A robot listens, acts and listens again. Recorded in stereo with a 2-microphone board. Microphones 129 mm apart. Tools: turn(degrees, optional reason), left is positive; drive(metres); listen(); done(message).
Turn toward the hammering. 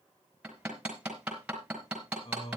turn(degrees=-30)
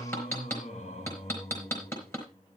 turn(degrees=20, reason="So it is at 20° left.")
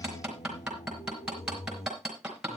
done("Facing the hammering.")